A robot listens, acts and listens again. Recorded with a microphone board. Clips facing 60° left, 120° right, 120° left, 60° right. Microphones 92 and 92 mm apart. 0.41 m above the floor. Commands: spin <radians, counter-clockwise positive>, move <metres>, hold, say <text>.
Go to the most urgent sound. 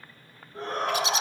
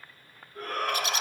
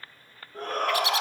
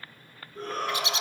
spin 2.09
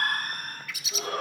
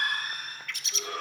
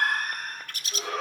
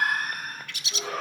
spin 0.44
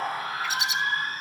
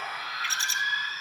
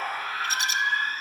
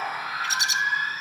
spin 0.26
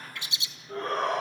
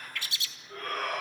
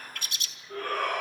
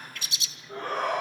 move 1.0
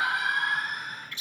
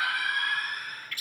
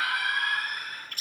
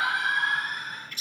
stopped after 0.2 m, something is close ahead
say Something is in my way. I am facing the shout but have not reached it.